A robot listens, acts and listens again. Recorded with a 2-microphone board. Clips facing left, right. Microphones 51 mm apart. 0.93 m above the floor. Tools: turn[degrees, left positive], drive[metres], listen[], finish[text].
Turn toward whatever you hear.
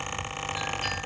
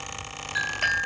Thought: The clink: about 75° right or 105° right.
Action: turn[-75]
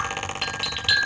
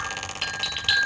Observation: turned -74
Action: finish[Facing the clink, 2 to 4 m away.]